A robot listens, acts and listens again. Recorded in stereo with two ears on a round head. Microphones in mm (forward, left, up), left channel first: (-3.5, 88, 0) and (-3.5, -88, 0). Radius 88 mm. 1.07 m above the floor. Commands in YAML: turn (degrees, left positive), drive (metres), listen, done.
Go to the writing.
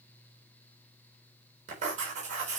turn: -40
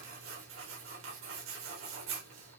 turn: -105
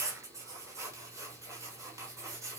turn: -15
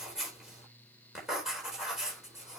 drive: 1.0
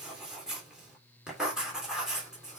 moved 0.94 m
drive: 1.0
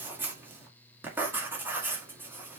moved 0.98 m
turn: -10
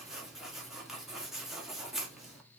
drive: 1.0
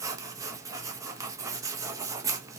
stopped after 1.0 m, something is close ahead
turn: -15
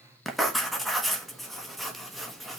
done: "Arrived at the writing, straight ahead."